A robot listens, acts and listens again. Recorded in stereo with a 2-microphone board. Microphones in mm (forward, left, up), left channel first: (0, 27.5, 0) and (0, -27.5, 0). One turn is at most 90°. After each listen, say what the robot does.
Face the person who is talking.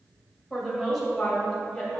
Turn 30° left.
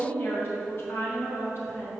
Turn 90° left.
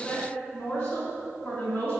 Turn 45° left.
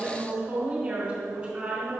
Turn 10° right.
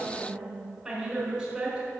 Facing the woman speaking.